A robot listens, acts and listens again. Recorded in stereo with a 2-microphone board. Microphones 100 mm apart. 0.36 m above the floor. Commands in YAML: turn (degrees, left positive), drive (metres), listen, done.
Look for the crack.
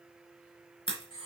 turn: 70
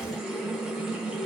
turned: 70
listen: true
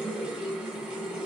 done: "I heard a crack, but can't make it out now. It was about straight ahead or 40° left."